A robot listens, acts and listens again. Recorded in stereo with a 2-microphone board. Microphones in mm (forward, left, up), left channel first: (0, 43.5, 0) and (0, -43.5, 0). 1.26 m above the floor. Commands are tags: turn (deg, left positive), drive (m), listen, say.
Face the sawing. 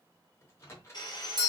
<turn deg="55"/>
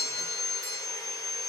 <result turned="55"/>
<turn deg="55"/>
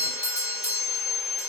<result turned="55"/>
<turn deg="20"/>
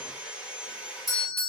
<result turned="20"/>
<say>Found it: sawing, straight ahead.</say>